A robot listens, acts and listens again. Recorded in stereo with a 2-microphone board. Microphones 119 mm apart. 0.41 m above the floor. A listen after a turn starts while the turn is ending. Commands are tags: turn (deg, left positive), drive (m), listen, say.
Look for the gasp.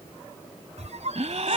<turn deg="-70"/>
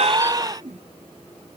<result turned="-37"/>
<turn deg="-35"/>
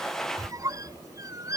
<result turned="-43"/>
<say>Facing where the gasp came from. I can't hear it now.</say>